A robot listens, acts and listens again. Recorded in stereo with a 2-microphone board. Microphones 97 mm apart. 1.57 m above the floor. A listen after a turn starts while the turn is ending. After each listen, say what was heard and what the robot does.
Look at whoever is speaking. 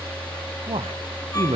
Turn 90° right.
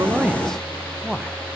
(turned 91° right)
Facing the man speaking, under 1 m away.